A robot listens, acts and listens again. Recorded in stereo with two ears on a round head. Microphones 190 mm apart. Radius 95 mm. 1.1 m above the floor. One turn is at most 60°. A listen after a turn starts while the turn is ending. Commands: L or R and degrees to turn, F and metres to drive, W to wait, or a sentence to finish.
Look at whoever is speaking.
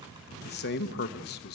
L50
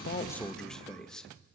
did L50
Facing the man speaking, 1 to 2 m away.